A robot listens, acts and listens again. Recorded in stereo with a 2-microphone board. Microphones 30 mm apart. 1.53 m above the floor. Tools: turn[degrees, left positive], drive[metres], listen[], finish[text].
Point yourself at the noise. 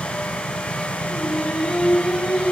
Thought: The singing: about 70° left or 110° left.
Action: turn[70]
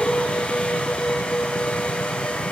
Thought: So it is at 35° left.
Action: turn[35]
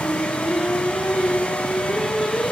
Action: finish[Facing the singing.]